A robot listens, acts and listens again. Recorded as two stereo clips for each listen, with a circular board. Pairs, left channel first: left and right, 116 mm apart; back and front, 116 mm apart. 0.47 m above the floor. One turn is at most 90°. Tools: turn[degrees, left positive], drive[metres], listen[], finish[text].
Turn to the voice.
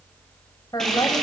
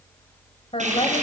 Thought: The woman speaking: 145° left.
Action: turn[90]
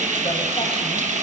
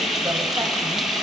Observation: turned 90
Thought: Nothing new. It was at 55° left.
Action: turn[55]
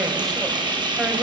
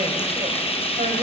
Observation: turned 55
Action: listen[]
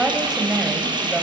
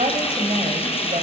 Action: finish[Facing the woman speaking, 2 to 4 m away.]